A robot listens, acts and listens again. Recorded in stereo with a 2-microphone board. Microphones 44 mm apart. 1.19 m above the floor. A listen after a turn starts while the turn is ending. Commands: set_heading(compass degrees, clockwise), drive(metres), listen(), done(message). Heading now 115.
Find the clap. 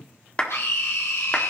set_heading(90)
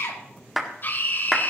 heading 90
done("Found it: a clap, straight ahead.")